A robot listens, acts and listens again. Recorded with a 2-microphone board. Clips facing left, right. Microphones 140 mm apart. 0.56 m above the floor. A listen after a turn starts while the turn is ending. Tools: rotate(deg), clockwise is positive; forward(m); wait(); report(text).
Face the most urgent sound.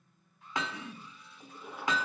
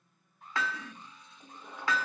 rotate(45)
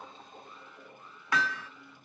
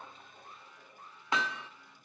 rotate(85)
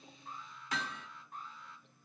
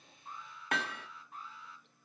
report("Facing the alarm.")